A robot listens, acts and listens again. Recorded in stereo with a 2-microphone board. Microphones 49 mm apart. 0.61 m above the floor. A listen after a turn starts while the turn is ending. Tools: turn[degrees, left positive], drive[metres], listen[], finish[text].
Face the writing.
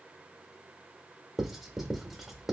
Action: turn[-30]
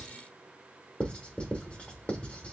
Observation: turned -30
Thought: So it is at 30° left.
Action: turn[30]
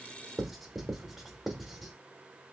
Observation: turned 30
Action: finish[Found it: writing, straight ahead, under 1 m away.]